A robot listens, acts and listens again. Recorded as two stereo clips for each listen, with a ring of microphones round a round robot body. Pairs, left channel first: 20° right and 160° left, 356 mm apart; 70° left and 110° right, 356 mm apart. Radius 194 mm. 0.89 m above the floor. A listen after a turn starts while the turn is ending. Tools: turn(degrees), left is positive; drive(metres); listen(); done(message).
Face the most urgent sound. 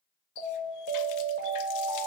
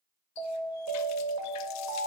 turn(degrees=-140)
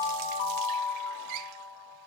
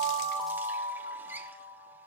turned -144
done("Facing the alarm, 2 to 4 m away.")